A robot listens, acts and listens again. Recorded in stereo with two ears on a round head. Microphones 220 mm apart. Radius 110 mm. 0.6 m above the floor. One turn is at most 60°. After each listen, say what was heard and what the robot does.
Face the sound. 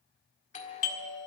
The doorbell: about 30° left or 150° left. Turn 30° left.
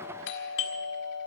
So it is at 115° left. Turn 60° left.
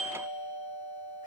The doorbell is now 40° left. Turn 40° left.
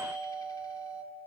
The doorbell is now 20° left. Turn 20° left.
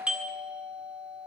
Found it: a doorbell, straight ahead.